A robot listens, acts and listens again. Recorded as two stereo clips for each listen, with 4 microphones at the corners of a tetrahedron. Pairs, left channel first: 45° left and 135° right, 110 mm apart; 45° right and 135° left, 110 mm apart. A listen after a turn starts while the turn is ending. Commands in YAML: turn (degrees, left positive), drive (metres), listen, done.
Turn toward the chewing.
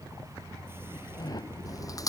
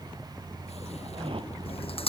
turn: -15
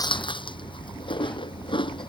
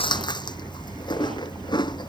done: "Facing the chewing."